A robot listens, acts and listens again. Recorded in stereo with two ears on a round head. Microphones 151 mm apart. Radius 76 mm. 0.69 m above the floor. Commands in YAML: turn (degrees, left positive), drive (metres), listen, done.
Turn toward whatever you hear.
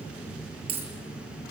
turn: -35
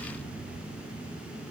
listen: true
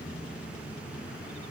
done: "I heard a dropped coin, but can't make it out now. It was about straight ahead or 110° right."